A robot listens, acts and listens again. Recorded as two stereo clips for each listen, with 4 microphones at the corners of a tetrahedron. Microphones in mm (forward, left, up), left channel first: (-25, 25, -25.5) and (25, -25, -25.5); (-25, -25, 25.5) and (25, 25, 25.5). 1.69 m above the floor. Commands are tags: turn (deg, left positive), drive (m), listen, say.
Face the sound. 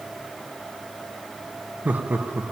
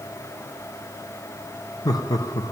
<turn deg="-110"/>
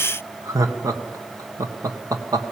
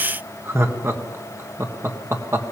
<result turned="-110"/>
<say>Found it: laughter, straight ahead.</say>